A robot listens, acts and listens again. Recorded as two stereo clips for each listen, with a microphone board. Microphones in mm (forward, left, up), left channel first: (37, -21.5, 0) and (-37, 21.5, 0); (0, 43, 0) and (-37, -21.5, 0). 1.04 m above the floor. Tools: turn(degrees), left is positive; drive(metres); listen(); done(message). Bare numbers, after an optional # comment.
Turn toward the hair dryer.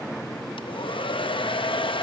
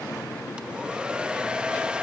# The hair dryer: 45° right.
turn(-45)
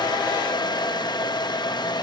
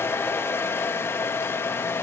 done("Found it: a hair dryer, straight ahead, under 1 m away.")